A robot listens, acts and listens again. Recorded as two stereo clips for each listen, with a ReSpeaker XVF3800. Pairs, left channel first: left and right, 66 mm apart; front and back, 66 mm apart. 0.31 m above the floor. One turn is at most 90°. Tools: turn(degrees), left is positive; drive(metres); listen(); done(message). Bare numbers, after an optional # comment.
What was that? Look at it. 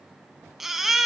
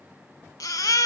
done("Found it: a baby crying, straight ahead.")